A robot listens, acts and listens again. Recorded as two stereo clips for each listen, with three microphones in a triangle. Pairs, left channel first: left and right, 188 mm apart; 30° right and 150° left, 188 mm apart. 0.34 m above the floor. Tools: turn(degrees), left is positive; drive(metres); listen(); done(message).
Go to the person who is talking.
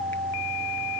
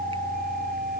listen()
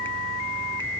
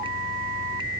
listen()
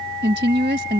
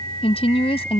turn(degrees=-85)
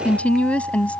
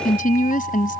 turn(degrees=10)
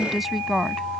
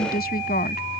drive(metres=1.0)
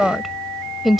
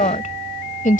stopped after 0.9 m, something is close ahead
done("Arrived at the woman speaking, straight ahead.")